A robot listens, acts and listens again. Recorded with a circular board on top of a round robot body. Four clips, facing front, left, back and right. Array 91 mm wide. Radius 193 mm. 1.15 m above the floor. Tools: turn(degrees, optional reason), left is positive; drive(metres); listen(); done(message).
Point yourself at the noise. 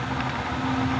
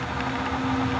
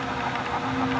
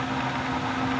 listen()
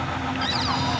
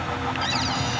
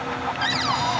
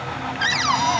turn(degrees=-105, reason="The cupboard door: 105° right.")
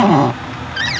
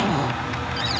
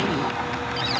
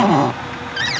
turn(degrees=-30, reason="The cupboard door is now 30° right.")
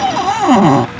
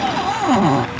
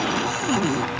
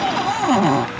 done("Facing the cupboard door.")